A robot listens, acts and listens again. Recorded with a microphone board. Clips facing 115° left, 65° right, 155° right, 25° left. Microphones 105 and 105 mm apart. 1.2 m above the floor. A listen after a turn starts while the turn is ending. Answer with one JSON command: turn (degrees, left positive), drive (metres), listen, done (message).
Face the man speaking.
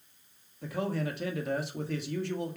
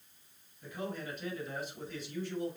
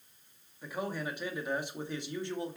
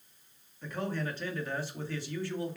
{"turn": 135}
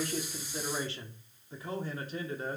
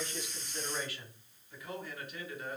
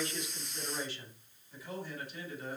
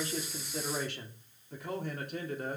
{"turn": 55}
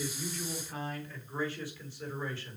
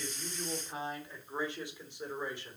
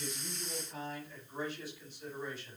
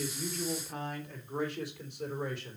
{"done": "Facing the man speaking."}